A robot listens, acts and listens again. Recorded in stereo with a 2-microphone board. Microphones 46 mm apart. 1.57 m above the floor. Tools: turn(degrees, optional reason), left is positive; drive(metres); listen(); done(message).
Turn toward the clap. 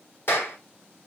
turn(degrees=55, reason="The clap: about 55° left or 125° left.")
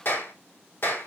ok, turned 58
turn(degrees=65, reason="So it is at 65° left.")
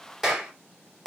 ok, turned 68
done("Facing the clap.")